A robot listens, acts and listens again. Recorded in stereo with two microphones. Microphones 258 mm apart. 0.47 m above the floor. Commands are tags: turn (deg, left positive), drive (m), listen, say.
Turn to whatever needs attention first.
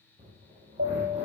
<turn deg="-55"/>
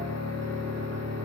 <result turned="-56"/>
<listen/>
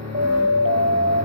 <turn deg="-60"/>
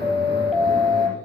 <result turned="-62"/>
<say>Found it: a siren, straight ahead.</say>